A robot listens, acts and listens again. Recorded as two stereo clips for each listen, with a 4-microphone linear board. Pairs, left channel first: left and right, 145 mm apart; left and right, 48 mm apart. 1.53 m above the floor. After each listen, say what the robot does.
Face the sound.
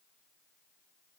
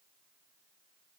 Keep listening.
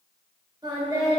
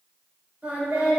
Turn 30° right.
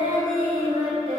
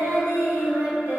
Turn 125° right.
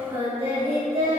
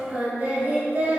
Turn 45° right.
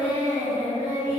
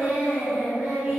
Turn 15° right.
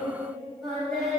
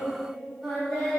Facing the singing.